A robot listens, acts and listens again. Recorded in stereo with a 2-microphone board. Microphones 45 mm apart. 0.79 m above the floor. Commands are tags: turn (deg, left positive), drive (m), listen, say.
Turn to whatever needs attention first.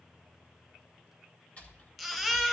<turn deg="30"/>
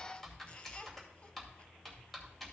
<listen/>
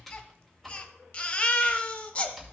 <turn deg="145"/>
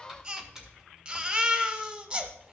<turn deg="-25"/>
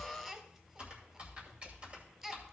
<turn deg="-15"/>
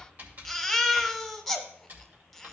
<say>Facing the baby crying, 1 to 2 m away.</say>